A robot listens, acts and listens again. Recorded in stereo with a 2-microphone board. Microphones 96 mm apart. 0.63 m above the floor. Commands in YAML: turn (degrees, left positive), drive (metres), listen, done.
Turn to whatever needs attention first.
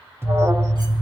turn: -25
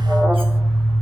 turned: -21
done: "Found it: an alarm, straight ahead."